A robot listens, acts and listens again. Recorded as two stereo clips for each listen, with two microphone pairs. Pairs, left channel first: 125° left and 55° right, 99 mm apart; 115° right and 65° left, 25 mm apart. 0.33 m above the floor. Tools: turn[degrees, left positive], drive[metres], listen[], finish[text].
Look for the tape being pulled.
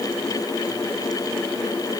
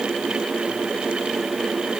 Action: listen[]
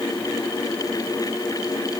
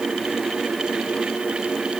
Action: listen[]
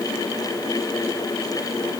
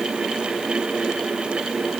Action: finish[I can't make out tape being pulled to turn to.]